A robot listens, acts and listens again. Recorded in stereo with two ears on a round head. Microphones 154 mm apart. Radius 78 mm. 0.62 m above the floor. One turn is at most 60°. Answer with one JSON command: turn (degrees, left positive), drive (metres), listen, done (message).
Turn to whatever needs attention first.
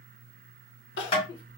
{"turn": 60}
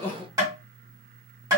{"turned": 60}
{"turn": 15}
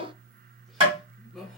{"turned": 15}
{"done": "Facing the crying."}